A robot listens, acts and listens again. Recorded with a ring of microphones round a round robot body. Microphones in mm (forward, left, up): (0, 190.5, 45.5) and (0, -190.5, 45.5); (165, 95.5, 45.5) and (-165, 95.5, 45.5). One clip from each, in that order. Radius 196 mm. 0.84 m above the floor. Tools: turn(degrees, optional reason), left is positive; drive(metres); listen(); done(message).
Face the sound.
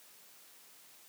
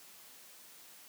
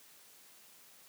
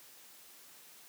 listen()
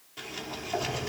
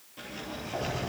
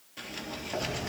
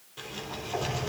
turn(degrees=30, reason="The sliding door: 30° left.")
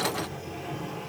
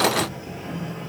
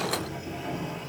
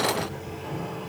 done("Facing the sliding door.")